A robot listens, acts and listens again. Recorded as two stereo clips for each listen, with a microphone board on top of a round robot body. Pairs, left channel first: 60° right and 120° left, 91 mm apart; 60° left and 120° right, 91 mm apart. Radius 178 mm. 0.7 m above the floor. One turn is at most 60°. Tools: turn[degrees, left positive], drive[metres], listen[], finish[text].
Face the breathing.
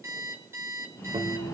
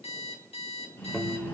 Action: finish[Found it: breathing, straight ahead.]